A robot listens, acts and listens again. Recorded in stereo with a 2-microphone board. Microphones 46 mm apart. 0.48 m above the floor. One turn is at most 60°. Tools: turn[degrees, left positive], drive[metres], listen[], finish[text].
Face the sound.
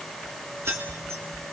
Thought: The keys jangling: about 70° right or 110° right.
Action: turn[-60]
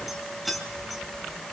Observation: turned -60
Action: finish[Found it: keys jangling, straight ahead, 2 to 4 m away.]